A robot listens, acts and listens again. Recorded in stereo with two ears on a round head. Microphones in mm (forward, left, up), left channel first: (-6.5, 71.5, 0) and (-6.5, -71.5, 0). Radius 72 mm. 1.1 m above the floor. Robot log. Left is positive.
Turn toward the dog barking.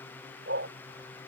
note: The dog barking: about 75° right or 105° right.
cmd yaw -75
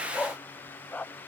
note: So it is at 10° left.
cmd yaw +10
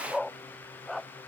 end: Facing the dog barking.